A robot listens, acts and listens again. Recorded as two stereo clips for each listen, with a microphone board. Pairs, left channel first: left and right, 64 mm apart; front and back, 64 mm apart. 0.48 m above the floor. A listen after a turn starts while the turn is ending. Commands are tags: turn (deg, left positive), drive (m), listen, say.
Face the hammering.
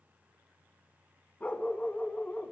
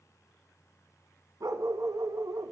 <listen/>
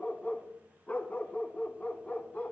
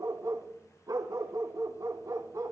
<listen/>
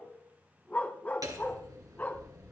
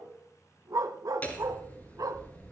<turn deg="-65"/>
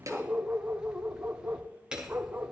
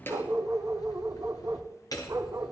<turn deg="-10"/>
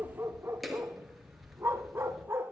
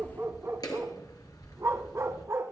<say>Found it: hammering, straight ahead, 2 to 4 m away.</say>